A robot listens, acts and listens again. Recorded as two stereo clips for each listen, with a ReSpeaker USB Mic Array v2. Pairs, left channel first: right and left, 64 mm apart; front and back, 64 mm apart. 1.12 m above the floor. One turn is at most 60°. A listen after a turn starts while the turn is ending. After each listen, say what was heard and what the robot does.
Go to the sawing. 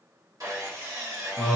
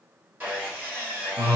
The sawing: 120° left. Turn 60° left.
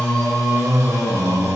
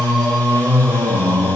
Nothing new. It was at 60° left. Turn 60° left.
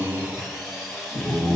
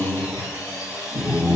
Drive 1.0 m forward.
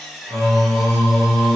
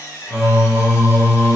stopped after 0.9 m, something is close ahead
I am next to the sawing.